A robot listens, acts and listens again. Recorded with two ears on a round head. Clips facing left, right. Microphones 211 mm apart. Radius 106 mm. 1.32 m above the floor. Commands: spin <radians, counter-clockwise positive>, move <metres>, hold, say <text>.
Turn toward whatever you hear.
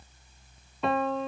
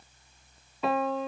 spin 0.52
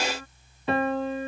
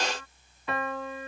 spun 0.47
spin 2.71
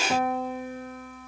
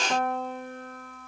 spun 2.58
say Found it: a piano, straight ahead.